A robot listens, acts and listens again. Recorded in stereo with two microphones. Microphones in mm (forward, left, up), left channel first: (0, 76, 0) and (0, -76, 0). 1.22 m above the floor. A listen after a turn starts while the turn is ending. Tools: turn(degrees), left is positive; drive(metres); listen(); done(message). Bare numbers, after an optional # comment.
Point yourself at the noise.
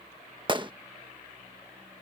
# The gunshot: about 30° right or 150° right.
turn(-30)
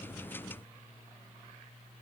listen()
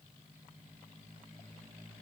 done("I heard a gunshot, but can't make it out now. It was about straight ahead or 120° right.")